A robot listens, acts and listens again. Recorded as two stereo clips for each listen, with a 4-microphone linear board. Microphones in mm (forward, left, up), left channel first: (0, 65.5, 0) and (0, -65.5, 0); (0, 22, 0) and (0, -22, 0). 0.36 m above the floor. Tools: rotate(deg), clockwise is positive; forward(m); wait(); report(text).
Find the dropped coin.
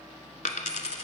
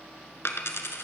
rotate(-75)
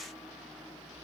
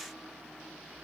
wait()
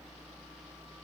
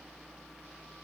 report("I heard a dropped coin, but can't make it out now. It was about straight ahead or 30° left.")